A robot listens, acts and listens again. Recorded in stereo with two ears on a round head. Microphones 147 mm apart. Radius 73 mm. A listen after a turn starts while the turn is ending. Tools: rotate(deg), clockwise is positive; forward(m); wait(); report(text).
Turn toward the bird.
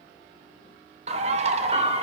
rotate(40)
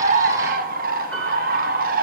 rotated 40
rotate(90)
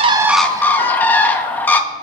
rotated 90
rotate(-15)
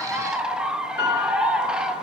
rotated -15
report("Found it: a bird, straight ahead.")